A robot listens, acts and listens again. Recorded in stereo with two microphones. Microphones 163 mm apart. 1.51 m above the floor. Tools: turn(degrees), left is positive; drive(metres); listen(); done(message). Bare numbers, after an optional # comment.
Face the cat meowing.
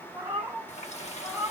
turn(-30)
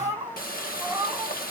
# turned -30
turn(-30)
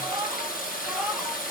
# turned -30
turn(-30)
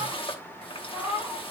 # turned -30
turn(-30)
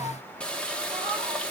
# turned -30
listen()
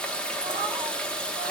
listen()
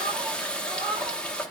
# So it is at 150° right.
turn(-150)
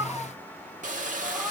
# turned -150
listen()
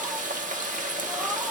listen()
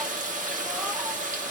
done("Facing where the cat meowing came from. I can't hear it now.")